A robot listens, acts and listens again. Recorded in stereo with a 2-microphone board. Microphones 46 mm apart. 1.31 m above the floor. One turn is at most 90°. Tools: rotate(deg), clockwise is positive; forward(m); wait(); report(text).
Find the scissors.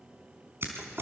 rotate(60)
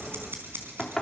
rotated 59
rotate(60)
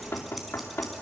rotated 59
wait()
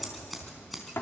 report("Found it: scissors, straight ahead, over 4 m away.")